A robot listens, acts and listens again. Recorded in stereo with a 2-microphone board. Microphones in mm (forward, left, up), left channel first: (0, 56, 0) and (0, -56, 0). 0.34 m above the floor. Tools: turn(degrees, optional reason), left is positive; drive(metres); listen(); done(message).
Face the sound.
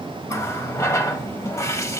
turn(degrees=25, reason="The running tap: about 25° left or 155° left.")
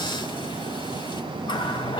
turn(degrees=130, reason="So it is at 130° left.")
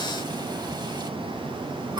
turn(degrees=-45, reason="The running tap is now 45° right.")
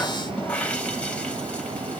turn(degrees=15, reason="The running tap is now 15° left.")
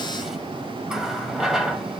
done("Found it: a running tap, straight ahead.")